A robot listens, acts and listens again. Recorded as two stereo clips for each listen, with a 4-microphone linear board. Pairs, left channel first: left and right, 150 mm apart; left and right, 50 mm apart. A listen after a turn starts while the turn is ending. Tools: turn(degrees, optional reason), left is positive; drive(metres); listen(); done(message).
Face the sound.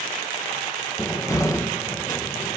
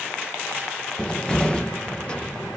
turn(degrees=20, reason="The cupboard door: about 20° left or 160° left.")
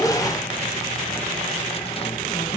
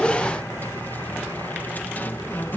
turn(degrees=140, reason="So it is at 140° left.")
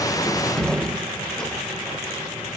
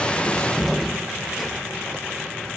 done("Found it: a cupboard door, straight ahead.")